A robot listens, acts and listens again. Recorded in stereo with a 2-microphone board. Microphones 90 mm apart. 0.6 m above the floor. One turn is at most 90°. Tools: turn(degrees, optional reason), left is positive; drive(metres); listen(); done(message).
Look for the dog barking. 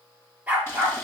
turn(degrees=-20, reason="The dog barking: about 20° right or 160° right.")
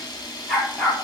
done("Found it: a dog barking, straight ahead.")